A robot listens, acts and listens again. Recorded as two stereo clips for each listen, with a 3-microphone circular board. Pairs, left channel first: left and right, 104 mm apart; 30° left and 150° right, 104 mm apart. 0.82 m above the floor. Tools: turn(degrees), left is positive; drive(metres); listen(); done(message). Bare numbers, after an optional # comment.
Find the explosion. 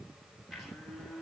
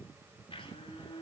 listen()
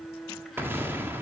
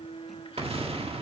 # The explosion: 160° right.
turn(-160)
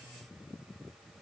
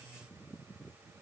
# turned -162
done("I heard an explosion from this way, but can't make it out now.")